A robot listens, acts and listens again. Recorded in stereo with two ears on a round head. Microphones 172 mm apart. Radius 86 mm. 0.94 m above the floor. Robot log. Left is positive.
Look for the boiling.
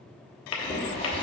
note: The boiling: about 30° left or 150° left.
cmd yaw +30
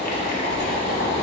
note: So it is at 120° left.
cmd yaw +120
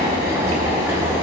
note: The boiling is now 15° right.
cmd yaw -15
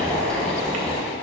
end: Found it: boiling, straight ahead, 1 to 2 m away.